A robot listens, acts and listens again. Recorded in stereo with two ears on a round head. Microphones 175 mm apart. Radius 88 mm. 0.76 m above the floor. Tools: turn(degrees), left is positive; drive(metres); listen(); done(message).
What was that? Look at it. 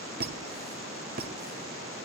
turn(degrees=-50)
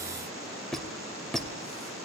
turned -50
done("Facing the squeak, 1 to 2 m away.")